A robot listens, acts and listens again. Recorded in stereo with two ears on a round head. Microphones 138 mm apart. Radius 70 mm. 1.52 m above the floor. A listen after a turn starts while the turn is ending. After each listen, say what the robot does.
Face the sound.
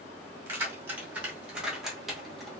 Turn 30° left.
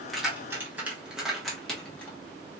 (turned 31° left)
Turn 30° left.
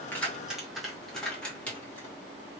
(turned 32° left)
Turn 30° left.
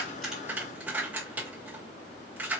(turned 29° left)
Turn 30° right.
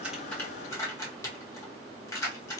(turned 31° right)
Turn 20° left.
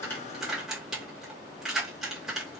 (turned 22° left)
Found it: keys jangling, straight ahead.